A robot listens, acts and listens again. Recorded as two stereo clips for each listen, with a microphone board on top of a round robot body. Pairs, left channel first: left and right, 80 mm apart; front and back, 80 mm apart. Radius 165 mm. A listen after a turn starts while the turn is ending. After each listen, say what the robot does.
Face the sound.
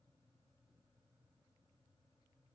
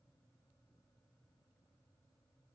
Keep listening.
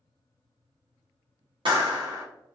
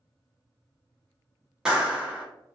Turn 100° right.
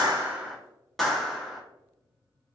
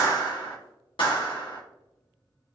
Facing the clap.